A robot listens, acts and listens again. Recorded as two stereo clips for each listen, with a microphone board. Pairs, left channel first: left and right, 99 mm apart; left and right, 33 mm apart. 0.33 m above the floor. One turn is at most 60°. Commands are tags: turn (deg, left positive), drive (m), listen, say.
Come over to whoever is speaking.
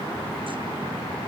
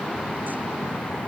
<listen/>
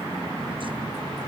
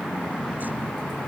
<listen/>
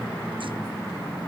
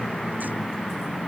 <say>I can't make out anyone speaking.</say>